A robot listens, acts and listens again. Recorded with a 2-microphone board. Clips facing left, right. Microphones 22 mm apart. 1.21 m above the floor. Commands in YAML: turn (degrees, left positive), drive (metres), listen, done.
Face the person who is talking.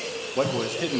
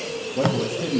turn: 45
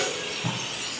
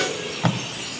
listen: true
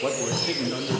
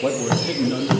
done: "Facing the man speaking, 1 to 2 m away."